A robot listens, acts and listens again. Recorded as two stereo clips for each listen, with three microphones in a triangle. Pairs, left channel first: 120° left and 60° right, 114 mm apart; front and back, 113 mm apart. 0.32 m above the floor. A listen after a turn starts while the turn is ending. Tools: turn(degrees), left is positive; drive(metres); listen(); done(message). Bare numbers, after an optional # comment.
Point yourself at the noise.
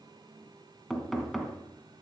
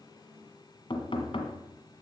# The knocking: 30° left.
turn(30)
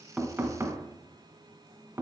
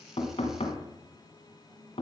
done("Found it: knocking, straight ahead.")